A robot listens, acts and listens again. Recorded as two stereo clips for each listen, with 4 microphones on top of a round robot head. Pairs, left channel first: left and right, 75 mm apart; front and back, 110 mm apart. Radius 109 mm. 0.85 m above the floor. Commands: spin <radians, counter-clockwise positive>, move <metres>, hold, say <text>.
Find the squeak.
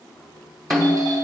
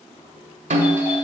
hold
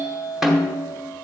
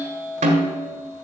hold
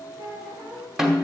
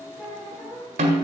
spin -1.05
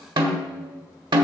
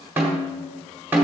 hold
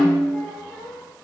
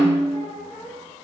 say Found it: a squeak, straight ahead.